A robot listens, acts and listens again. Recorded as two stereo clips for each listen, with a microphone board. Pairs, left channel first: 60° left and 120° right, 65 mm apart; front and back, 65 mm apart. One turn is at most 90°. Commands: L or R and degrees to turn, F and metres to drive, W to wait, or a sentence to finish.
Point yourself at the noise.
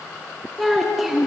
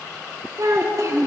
L90
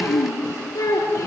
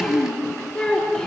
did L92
L80
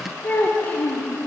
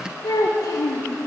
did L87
Found it: a child speaking, straight ahead, 2 to 4 m away.